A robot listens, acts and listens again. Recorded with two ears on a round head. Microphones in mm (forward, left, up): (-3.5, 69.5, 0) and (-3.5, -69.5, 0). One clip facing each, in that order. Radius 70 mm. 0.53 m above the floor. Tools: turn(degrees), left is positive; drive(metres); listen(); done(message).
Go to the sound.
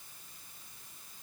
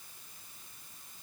listen()
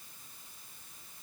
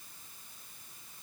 listen()
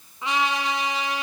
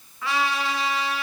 turn(degrees=20)
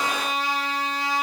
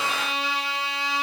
turn(degrees=140)
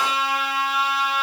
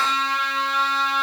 turn(degrees=10)
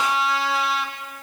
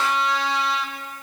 drive(metres=1.0)
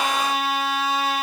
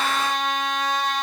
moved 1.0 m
drive(metres=1.0)
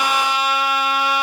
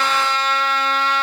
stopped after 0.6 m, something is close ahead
turn(degrees=10)
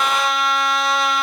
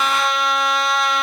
done("Arrived at the trumpet, straight ahead.")